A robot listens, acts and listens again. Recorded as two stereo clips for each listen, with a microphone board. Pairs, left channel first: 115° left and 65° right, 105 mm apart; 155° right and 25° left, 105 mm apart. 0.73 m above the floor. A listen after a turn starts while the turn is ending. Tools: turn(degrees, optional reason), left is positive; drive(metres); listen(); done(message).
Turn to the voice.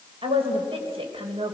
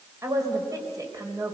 turn(degrees=-35, reason="The woman speaking: 35° right.")
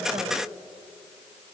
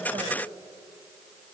listen()
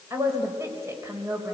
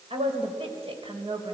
done("Facing the woman speaking, 2 to 4 m away.")